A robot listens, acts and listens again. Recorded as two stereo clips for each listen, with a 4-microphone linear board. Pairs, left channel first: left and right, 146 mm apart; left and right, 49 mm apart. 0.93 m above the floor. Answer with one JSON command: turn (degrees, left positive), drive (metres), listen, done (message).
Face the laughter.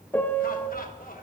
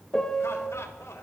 {"turn": 90}
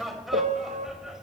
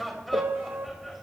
{"done": "Found it: laughter, straight ahead, 2 to 4 m away."}